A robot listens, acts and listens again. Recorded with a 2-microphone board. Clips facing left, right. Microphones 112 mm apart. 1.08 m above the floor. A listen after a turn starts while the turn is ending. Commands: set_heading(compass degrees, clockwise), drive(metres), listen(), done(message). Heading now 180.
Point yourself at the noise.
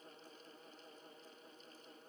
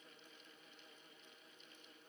listen()
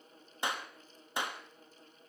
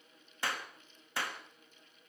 set_heading(160)
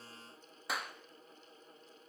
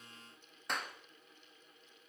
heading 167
done("Found it: a clap, straight ahead, 1 to 2 m away.")